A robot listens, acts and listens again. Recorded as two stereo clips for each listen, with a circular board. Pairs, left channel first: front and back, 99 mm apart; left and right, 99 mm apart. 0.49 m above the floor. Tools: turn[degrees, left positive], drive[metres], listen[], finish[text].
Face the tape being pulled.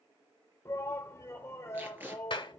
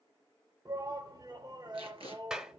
Thought: The tape being pulled: 110° right.
Action: turn[-110]
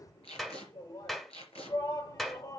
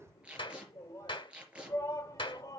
Thought: The tape being pulled is now 10° right.
Action: turn[-10]
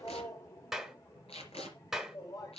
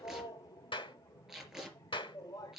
Action: finish[Facing the tape being pulled, over 4 m away.]